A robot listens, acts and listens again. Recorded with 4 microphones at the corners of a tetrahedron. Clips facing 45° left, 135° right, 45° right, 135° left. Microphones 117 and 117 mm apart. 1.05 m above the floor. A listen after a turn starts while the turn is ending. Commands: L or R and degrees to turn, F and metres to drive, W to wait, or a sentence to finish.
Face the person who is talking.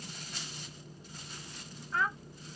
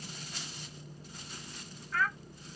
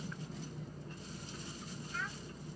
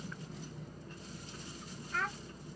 L110
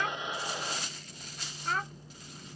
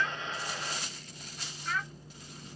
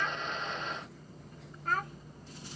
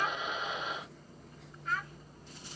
Facing the child speaking.